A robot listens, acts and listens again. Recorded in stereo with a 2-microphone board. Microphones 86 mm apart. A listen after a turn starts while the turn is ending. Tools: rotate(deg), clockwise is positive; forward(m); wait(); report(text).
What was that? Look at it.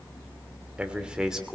rotate(30)
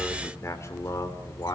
rotate(-45)
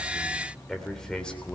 rotate(-10)
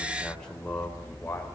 rotate(-15)
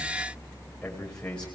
rotate(-10)
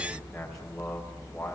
wait()
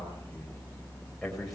wait()
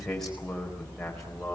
report("Found it: a man speaking, straight ahead.")